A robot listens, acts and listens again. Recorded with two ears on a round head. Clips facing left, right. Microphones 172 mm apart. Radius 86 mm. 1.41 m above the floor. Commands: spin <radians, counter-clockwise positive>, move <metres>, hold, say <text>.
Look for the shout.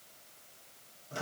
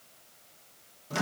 hold
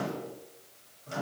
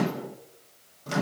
hold
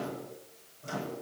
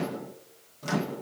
say I can't make out a shout to turn to.